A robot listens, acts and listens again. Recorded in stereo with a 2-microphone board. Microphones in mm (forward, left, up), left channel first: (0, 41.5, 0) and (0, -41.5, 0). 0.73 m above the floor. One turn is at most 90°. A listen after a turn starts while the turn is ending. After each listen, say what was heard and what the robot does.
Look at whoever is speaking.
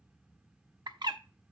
Keep listening.
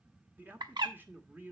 The man speaking: about 25° right or 155° right. Turn 25° right.
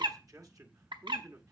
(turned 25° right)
So it is at 130° right. Turn 90° right.
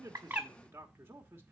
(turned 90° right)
The man speaking is now 35° right. Turn 35° right.
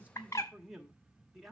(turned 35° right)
Facing the man speaking, 1 to 2 m away.